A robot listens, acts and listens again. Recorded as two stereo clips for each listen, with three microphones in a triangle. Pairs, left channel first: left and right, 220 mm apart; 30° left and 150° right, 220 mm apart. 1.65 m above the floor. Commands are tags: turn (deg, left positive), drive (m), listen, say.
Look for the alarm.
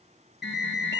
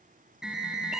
<turn deg="125"/>
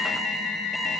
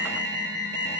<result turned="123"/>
<say>Facing the alarm, 2 to 4 m away.</say>